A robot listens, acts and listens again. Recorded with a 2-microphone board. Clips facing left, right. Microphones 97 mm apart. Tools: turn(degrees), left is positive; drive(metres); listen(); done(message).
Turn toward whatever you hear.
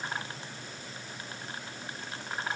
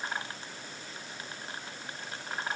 listen()
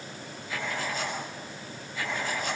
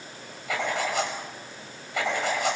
turn(degrees=-90)
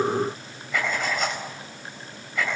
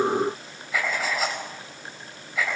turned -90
done("Facing the writing, over 4 m away.")